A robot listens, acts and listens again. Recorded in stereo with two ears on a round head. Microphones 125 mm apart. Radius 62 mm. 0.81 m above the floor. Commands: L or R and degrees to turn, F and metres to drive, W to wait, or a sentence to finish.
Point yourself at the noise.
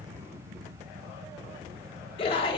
L40
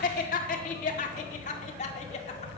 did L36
L130
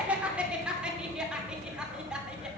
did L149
Facing the laughter.